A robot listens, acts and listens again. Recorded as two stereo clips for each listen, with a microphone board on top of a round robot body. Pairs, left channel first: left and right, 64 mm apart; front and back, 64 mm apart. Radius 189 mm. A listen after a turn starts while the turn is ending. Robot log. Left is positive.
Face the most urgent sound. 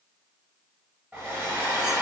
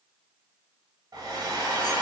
cmd idle
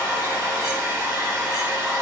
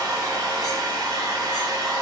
cmd idle
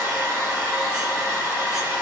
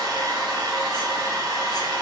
end: I can't make out anything urgent, only a hair dryer.